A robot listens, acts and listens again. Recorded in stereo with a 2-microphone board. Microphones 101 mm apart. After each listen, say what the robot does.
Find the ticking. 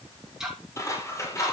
Turn 30° right.
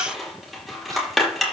Keep listening.
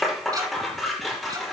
Turn 140° right.
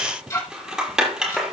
Turn 30° left.
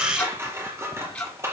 Turn 10° left.
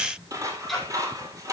Found it: ticking, straight ahead.